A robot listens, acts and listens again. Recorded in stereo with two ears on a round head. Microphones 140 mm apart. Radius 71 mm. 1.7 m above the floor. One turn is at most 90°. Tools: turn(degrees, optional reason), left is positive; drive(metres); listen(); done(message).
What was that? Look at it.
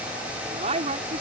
turn(degrees=-45, reason="The woman speaking: about 45° right or 135° right.")
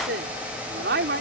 turn(degrees=-90, reason="So it is at 100° right.")
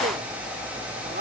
turn(degrees=-50, reason="The woman speaking is now 50° right.")
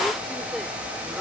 listen()
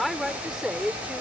done("Found it: a woman speaking, straight ahead.")